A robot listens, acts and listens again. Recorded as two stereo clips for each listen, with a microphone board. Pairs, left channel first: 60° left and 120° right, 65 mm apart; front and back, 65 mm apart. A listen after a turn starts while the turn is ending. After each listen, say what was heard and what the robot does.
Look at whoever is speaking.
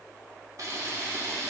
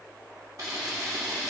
Keep listening.
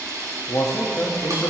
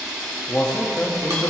The man speaking: 65° left. Turn 65° left.
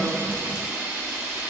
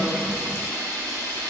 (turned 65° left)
Keep listening.
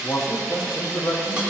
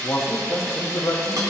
The man speaking is now 35° left. Turn 35° left.
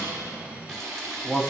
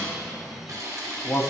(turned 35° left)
Found it: a man speaking, straight ahead.